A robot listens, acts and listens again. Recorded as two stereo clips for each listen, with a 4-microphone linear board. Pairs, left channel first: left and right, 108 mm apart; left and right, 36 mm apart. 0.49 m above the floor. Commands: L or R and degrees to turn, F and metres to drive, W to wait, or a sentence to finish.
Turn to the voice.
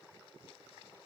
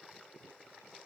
W
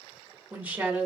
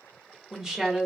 R15
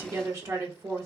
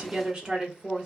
R150
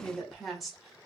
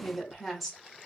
Found it: a woman speaking, straight ahead.